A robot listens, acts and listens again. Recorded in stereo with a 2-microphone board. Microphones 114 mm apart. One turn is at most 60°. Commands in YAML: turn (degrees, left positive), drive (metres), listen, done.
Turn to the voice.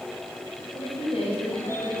turn: 55
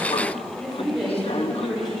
done: "Found it: a woman speaking, straight ahead."